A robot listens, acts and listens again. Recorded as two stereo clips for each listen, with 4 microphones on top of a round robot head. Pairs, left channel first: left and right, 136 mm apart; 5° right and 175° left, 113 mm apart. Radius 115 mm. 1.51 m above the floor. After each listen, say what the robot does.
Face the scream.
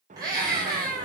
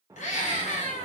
Turn 20° right.
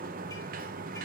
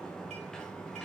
Keep listening.
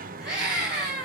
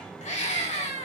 Found it: a scream, straight ahead.